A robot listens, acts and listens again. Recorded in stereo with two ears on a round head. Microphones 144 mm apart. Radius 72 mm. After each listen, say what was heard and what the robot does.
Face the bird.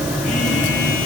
Keep listening.
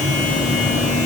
Keep listening.
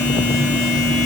I can't make out a bird to turn to.